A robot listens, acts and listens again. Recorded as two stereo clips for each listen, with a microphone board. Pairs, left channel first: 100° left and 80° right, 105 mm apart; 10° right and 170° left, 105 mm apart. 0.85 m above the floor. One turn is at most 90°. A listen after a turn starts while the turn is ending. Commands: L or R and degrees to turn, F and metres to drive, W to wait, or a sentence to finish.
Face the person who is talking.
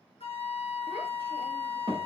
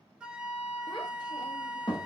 R60
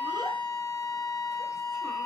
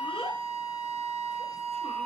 W
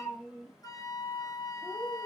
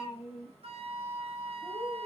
Facing the child speaking.